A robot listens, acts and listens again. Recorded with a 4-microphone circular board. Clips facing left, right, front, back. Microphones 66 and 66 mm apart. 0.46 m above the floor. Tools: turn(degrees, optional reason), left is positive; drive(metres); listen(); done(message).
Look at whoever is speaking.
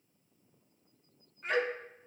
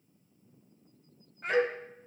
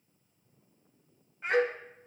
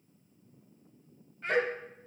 turn(degrees=-75, reason="The child speaking: 75° right.")
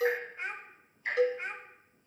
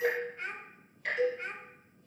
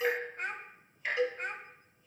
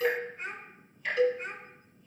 turn(degrees=20, reason="The child speaking is now 20° left.")
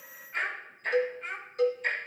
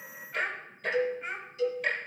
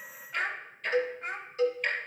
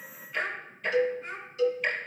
done("Found it: a child speaking, straight ahead.")